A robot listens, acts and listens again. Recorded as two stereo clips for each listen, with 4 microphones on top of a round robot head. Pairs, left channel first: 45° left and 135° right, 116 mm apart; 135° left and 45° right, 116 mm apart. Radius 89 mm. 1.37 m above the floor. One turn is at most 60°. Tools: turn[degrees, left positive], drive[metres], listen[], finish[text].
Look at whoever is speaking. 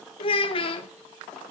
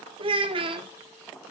Action: finish[Facing the child speaking.]